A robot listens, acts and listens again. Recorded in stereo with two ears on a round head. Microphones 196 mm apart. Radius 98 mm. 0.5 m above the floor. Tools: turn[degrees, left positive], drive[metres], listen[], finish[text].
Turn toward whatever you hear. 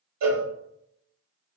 Action: turn[-90]
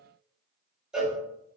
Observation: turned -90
Action: finish[Found it: a cowbell, straight ahead, 1 to 2 m away.]